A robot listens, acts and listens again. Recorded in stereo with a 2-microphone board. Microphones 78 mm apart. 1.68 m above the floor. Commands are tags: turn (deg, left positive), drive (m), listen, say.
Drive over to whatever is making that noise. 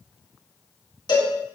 <turn deg="90"/>
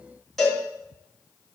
<drive m="1.0"/>
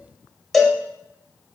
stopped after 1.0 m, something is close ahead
<say>I am next to the cowbell.</say>